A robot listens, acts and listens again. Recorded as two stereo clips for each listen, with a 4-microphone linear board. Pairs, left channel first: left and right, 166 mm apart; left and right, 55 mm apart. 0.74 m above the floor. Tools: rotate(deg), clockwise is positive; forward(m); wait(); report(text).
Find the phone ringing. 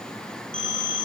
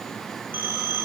rotate(35)
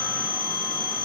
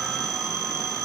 rotate(110)
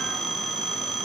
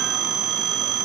report("Found it: a phone ringing, straight ahead, over 4 m away.")